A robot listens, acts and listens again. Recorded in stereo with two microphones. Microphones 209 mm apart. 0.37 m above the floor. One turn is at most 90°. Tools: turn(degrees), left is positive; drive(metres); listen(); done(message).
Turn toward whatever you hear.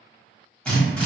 turn(degrees=30)
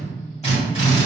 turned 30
turn(degrees=90)
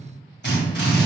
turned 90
turn(degrees=65)
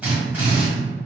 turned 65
done("Found it: a drill, straight ahead.")